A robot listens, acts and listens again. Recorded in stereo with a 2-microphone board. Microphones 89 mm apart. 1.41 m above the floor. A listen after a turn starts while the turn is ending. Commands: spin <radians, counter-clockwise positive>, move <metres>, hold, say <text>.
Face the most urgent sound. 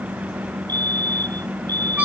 spin -0.87
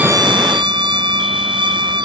hold
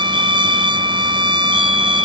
hold
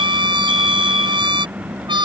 say I heard a fire alarm, but can't make it out now. It was about straight ahead or 80° right.